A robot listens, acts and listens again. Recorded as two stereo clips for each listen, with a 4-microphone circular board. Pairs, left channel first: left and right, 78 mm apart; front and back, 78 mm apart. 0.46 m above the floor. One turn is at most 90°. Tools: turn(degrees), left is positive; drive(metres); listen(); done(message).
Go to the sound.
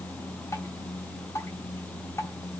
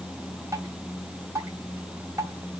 turn(degrees=90)
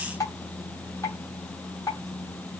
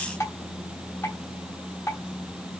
turn(degrees=50)
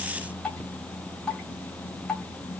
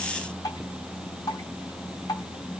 turn(degrees=15)
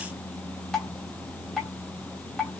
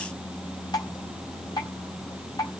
drive(metres=1.0)
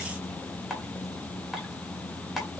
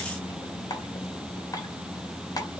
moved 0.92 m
drive(metres=1.0)
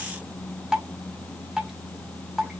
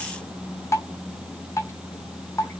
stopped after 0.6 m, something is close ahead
turn(degrees=-10)
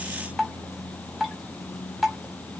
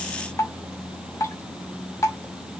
done("Arrived at the dripping, straight ahead.")